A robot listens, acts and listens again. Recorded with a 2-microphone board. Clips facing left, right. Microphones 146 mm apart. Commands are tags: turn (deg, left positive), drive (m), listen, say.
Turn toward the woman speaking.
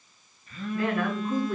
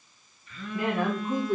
<turn deg="-25"/>
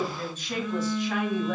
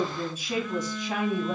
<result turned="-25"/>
<turn deg="-25"/>
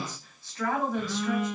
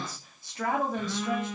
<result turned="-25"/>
<turn deg="-20"/>
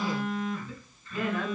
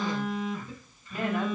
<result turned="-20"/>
<turn deg="-25"/>
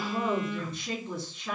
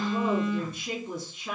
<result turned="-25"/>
<turn deg="-30"/>
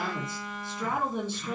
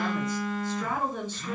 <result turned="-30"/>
<turn deg="15"/>
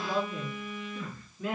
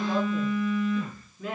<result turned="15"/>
<say>Facing the woman speaking.</say>